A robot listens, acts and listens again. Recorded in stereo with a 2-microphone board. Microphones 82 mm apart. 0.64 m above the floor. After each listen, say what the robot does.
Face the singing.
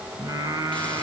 Turn 40° right.
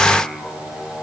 Turn 10° left.
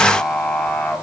Turn 15° left.
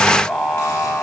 Turn 10° left.
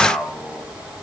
Found it: singing, straight ahead.